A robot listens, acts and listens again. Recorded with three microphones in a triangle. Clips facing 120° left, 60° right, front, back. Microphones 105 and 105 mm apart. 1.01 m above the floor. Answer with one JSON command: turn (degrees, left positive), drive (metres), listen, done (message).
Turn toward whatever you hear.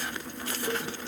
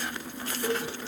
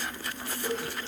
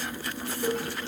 {"turn": -150}
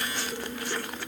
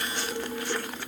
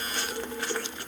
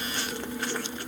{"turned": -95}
{"turn": -55}
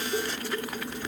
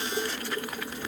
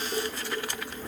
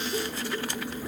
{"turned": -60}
{"done": "Facing the dishes clattering, over 4 m away."}